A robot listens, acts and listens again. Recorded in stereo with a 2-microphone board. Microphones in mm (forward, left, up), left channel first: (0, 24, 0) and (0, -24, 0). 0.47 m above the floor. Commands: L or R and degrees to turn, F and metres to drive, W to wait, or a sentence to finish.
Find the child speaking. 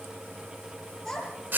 L30
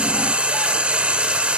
W
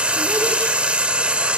W
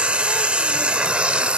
I heard a child speaking, but can't make it out now. It was about 20° right or 140° left.